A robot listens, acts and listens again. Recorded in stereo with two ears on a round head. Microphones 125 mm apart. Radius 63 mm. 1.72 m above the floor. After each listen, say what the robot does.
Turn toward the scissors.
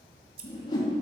Turn 45° right.
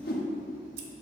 Keep listening.
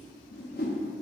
Keep listening.
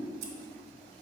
Turn 90° right.
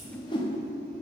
Keep listening.
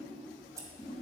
Turn 20° right.
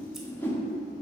Keep listening.
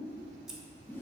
Found it: scissors, straight ahead.